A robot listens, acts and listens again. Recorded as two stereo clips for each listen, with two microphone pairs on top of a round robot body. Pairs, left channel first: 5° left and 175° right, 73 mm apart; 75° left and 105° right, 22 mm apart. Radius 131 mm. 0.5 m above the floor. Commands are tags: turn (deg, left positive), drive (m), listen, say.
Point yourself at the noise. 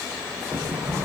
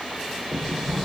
<turn deg="-30"/>
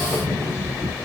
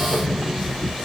<turn deg="-15"/>
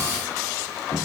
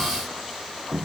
<say>Facing the sliding door, 2 to 4 m away.</say>